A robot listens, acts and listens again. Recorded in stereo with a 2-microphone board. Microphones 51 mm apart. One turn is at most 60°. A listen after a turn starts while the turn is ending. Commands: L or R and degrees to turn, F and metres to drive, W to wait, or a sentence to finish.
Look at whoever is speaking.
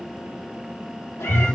W
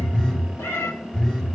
W
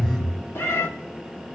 I can't make out anyone speaking to turn to.